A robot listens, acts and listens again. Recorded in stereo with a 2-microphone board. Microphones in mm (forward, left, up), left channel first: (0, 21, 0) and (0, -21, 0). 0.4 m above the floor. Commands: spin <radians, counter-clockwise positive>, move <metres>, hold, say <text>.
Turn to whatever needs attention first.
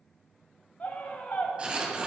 spin 0.70
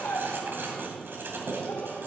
spin 1.57
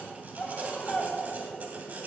spin 0.44
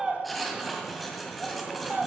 spin -0.35
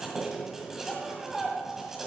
spin -0.17
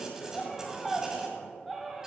say Facing the scream, 2 to 4 m away.